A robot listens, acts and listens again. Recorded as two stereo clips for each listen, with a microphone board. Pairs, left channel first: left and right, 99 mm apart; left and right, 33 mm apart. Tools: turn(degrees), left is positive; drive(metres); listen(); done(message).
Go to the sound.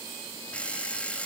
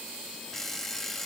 turn(degrees=30)
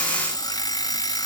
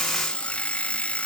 turn(degrees=135)
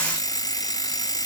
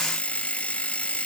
turn(degrees=45)
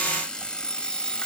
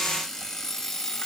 turn(degrees=10)
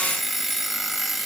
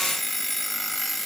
drive(metres=1.0)
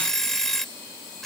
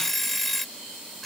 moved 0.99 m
drive(metres=1.0)
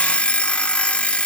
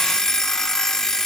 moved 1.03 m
turn(degrees=15)
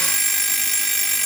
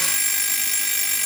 drive(metres=1.0)
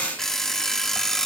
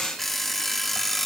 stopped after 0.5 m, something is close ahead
done("I am next to the alarm clock.")